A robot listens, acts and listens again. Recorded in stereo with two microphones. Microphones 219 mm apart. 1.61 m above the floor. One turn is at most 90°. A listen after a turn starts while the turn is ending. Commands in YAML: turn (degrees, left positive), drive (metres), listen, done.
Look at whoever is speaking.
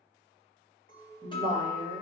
turn: -25
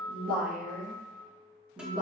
turn: -20
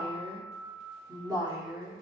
turn: -30
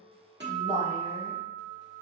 turn: -25
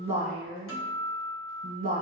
turn: -90
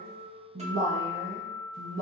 turn: -60
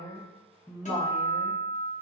done: "Facing the woman speaking."